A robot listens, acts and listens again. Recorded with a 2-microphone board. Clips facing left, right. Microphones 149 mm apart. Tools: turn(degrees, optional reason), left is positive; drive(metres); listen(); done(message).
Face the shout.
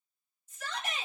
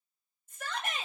turn(degrees=-50, reason="The shout: about 50° right or 130° right.")
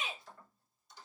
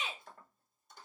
turn(degrees=-75, reason="So it is at 75° right.")
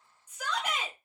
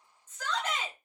turn(degrees=10, reason="The shout is now 10° left.")
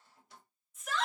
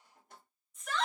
done("Found it: a shout, straight ahead, 1 to 2 m away.")